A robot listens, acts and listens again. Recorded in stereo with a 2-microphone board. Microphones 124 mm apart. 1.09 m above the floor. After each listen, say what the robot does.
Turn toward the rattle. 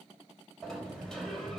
Keep listening.
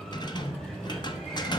Turn 35° left.
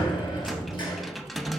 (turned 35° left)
Facing the rattle, under 1 m away.